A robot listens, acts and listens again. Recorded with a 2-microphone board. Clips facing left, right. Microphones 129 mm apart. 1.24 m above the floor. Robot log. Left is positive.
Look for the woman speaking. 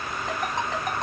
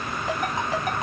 cmd idle
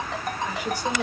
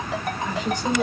cmd yaw +30
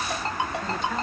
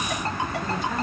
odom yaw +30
cmd idle
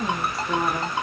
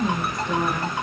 cmd yaw +30
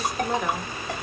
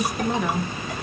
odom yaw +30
cmd yaw +30
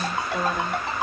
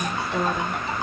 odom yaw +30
end: Found it: a woman speaking, straight ahead.